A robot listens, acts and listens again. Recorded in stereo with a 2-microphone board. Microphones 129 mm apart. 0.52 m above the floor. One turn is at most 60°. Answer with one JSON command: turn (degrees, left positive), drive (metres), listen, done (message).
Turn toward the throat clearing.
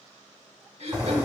{"turn": -55}
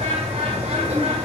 {"listen": true}
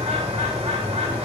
{"listen": true}
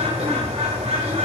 {"done": "I heard throat clearing, but can't make it out now. It was about straight ahead or 70° right."}